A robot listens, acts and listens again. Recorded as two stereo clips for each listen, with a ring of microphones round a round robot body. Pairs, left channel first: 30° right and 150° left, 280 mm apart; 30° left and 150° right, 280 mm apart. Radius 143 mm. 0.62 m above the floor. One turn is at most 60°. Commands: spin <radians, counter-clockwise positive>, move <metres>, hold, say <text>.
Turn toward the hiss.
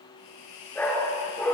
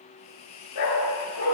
spin -0.17
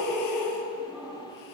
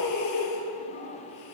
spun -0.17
hold
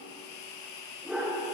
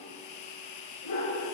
say Found it: a hiss, straight ahead, 2 to 4 m away.